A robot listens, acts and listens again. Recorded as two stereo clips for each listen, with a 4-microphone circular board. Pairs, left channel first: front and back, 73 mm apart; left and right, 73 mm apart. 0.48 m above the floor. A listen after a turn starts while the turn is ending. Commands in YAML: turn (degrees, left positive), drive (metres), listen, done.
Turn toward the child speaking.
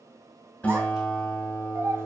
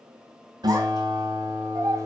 turn: -125
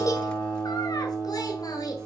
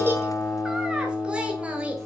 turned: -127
turn: -20
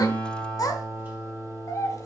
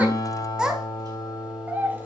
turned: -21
turn: -30
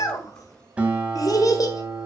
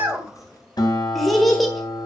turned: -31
done: "Facing the child speaking."